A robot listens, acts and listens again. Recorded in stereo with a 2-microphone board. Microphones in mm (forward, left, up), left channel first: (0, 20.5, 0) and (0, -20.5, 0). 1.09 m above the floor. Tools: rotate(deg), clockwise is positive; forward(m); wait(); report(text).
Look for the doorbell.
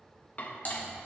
wait()
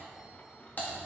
wait()
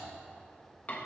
report("I can't make out a doorbell to turn to.")